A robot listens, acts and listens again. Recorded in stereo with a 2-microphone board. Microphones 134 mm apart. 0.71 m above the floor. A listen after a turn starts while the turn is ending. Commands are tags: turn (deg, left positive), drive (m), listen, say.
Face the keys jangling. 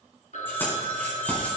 <turn deg="30"/>
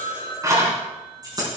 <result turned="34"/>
<turn deg="-30"/>
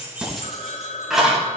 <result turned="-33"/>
<say>Facing the keys jangling, over 4 m away.</say>